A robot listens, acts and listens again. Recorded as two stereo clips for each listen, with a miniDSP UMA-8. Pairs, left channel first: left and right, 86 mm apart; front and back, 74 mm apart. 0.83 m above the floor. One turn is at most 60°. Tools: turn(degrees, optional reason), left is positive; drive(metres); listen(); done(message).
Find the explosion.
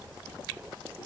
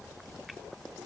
listen()
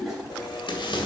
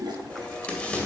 turn(degrees=60, reason="The explosion: 75° left.")
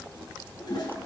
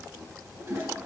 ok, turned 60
turn(degrees=15, reason="Nothing new. It was at 15° left.")
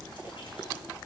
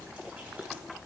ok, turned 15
done("I heard an explosion from this way, but can't make it out now.")